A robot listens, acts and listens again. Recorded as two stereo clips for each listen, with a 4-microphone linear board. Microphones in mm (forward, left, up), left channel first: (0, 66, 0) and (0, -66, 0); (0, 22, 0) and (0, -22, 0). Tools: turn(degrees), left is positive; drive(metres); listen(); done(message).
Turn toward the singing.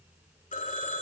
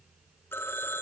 listen()
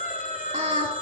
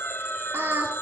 turn(degrees=-65)
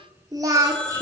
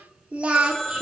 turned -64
turn(degrees=-25)
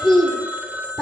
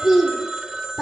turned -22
done("Found it: singing, straight ahead, 2 to 4 m away.")